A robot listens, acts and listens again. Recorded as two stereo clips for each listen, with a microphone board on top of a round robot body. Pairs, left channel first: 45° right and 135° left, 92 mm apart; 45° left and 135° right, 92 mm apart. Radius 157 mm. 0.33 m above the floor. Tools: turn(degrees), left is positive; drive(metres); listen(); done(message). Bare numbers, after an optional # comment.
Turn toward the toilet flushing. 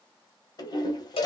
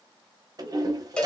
# The toilet flushing: 85° right.
turn(-85)
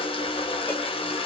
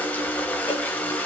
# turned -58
# The toilet flushing is now 30° right.
turn(-30)
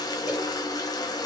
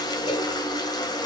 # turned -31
done("Facing the toilet flushing.")